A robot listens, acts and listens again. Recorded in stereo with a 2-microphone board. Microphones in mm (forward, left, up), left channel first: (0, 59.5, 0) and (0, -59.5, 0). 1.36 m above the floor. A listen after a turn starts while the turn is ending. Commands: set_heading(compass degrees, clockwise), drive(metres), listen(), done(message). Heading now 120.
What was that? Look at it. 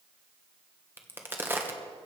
set_heading(140)
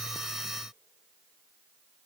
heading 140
listen()
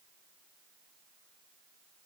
done("I heard a crack, but can't make it out now. It was about straight ahead or 140° right.")